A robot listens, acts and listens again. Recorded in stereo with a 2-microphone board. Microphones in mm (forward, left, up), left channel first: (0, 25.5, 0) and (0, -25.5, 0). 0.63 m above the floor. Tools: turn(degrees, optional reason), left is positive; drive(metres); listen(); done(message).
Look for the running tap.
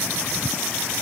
listen()
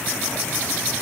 listen()
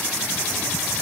done("I can't make out a running tap.")